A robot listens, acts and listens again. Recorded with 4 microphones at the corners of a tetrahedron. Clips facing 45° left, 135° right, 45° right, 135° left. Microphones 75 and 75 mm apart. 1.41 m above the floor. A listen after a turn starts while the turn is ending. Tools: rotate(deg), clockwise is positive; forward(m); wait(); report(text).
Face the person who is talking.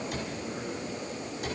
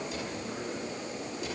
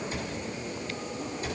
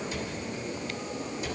wait()
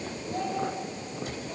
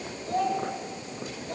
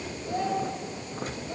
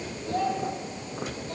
rotate(115)
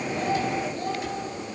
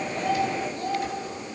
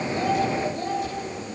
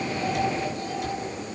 report("Facing the child speaking.")